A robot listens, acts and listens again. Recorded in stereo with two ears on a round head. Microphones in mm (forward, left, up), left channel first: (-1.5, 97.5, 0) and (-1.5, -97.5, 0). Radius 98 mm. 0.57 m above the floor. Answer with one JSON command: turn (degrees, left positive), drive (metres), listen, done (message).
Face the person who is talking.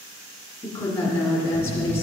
{"turn": 30}
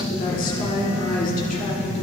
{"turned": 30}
{"turn": 130}
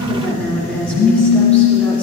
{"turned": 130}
{"turn": 10}
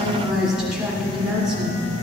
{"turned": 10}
{"done": "Facing the woman speaking."}